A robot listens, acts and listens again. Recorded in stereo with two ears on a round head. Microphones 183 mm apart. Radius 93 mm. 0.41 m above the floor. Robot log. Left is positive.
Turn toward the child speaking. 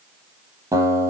cmd idle
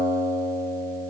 cmd idle
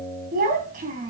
note: The child speaking: about 40° right or 140° right.
cmd yaw -40
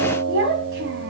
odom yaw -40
note: So it is at 115° right.
cmd yaw -115
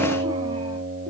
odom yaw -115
cmd idle
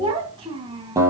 note: The child speaking is now 25° right.
cmd yaw -25
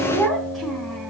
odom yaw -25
end: Found it: a child speaking, straight ahead.